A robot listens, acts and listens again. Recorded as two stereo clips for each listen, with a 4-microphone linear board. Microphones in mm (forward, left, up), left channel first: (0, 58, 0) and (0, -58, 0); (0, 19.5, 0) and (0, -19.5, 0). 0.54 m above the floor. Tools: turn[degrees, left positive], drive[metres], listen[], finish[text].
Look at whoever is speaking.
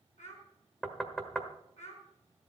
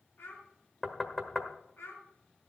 Action: turn[90]
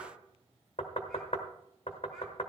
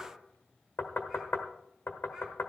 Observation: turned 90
Action: listen[]
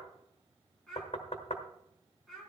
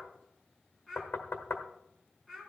Action: finish[Facing the child speaking, over 4 m away.]